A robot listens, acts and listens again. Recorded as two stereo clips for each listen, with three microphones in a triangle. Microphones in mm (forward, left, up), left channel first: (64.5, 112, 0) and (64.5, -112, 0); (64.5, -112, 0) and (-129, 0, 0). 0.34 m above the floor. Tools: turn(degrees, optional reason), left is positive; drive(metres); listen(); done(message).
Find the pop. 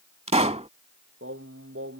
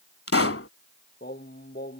turn(degrees=-30, reason="The pop: 30° right.")
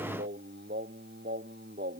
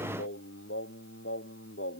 done("I heard a pop from this way, but can't make it out now.")